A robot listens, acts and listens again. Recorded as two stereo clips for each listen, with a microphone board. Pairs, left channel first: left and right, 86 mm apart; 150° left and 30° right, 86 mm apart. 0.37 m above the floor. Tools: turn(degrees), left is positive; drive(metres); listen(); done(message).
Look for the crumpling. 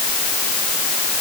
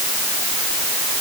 listen()
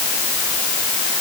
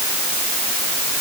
listen()
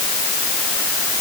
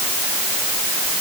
done("I can't make out crumpling to turn to.")